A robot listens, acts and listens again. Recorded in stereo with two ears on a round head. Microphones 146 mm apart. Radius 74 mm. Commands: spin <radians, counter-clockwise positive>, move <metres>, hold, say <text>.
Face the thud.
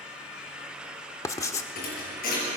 spin 0.96
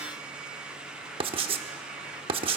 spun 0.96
hold
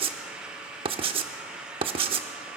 say I heard a thud, but can't make it out now. It was about straight ahead or 70° left.